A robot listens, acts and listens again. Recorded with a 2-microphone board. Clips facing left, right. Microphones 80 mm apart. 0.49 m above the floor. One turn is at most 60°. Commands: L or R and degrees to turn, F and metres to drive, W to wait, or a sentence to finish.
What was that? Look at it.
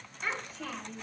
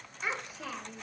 R30
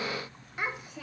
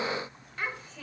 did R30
L15
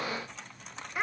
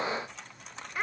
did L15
Facing the child speaking, 1 to 2 m away.